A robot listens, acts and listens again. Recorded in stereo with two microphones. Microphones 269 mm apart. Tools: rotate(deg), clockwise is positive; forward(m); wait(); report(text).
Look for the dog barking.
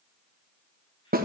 wait()
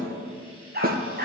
rotate(35)
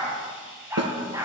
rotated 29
rotate(10)
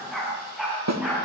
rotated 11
report("Facing the dog barking.")